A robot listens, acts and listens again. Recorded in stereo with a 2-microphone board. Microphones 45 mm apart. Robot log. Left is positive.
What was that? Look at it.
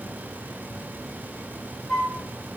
note: The flute: about 20° left or 160° left.
cmd yaw +20
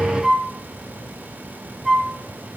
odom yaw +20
end: Facing the flute.